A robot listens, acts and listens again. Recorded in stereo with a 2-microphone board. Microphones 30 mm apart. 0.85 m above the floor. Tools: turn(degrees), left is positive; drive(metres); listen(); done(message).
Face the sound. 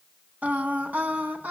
turn(degrees=-65)
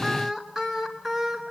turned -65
done("Found it: singing, straight ahead.")